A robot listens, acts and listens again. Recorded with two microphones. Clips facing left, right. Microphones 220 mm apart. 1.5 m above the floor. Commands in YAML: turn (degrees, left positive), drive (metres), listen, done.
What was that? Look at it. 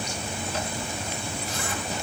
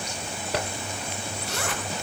turn: -75
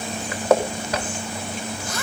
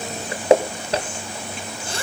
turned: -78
turn: -30
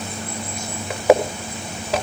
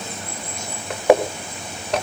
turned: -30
done: "Found it: a zipper, straight ahead."